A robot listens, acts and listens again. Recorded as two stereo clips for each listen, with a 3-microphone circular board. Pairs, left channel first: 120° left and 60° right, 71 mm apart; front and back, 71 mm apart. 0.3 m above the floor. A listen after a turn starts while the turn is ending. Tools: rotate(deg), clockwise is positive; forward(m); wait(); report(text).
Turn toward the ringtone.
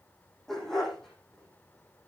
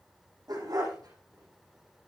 wait()
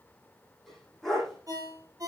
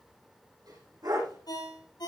rotate(25)
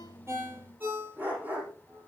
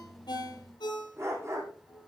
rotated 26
report("Facing the ringtone.")